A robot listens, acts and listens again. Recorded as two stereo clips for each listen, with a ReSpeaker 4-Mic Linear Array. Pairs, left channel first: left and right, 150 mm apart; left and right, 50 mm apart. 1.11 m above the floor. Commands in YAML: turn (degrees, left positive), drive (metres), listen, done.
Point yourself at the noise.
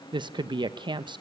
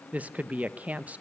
turn: -30
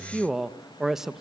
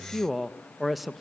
done: "Facing the woman speaking."